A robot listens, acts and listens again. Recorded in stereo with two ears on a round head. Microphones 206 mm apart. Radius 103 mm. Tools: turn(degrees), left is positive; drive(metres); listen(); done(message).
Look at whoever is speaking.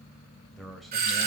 turn(degrees=30)
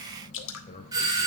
turn(degrees=150)
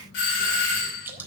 listen()
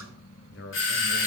turn(degrees=50)
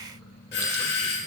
listen()
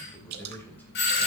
turn(degrees=10)
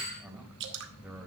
done("Found it: a man speaking, straight ahead, 2 to 4 m away.")